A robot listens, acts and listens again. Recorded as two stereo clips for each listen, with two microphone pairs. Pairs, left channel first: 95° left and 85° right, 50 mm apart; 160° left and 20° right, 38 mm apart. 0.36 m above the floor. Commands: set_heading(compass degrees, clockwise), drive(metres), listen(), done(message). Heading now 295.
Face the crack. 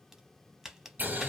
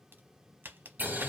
done("Facing the crack, 1 to 2 m away.")